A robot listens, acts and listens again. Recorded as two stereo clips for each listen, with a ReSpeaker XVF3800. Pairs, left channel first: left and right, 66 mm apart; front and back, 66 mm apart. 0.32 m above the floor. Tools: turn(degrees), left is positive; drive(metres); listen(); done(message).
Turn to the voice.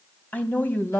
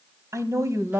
turn(degrees=145)
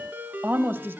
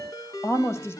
turn(degrees=-40)
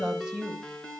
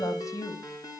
turn(degrees=-15)
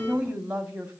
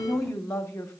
turn(degrees=-20)
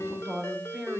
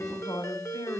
turn(degrees=-10)
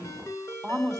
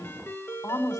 done("Facing the woman speaking, 2 to 4 m away.")